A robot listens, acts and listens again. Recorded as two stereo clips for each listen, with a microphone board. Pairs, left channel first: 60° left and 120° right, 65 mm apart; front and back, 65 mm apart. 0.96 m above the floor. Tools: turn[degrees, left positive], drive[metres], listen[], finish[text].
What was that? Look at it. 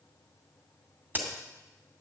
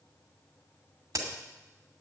Thought: The crack: straight behind.
Action: turn[180]
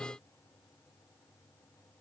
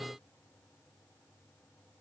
Action: finish[I heard a crack from this way, but can't make it out now.]